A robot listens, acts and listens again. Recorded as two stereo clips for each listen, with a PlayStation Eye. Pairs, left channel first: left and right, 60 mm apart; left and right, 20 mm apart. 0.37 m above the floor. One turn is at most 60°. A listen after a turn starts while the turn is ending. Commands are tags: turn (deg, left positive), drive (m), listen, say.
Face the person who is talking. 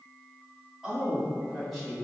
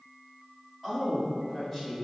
<turn deg="30"/>
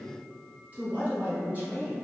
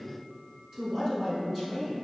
<turn deg="-25"/>
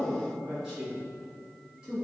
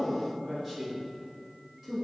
<say>Found it: a woman speaking, straight ahead.</say>